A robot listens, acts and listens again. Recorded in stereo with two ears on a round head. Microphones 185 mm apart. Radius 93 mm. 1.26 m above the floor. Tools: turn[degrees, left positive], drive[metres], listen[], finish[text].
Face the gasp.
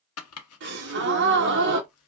Thought: The gasp: about 60° right or 120° right.
Action: turn[-60]
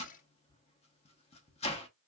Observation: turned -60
Action: listen[]
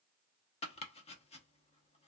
Action: finish[I heard a gasp, but can't make it out now. It was about straight ahead or 60° right.]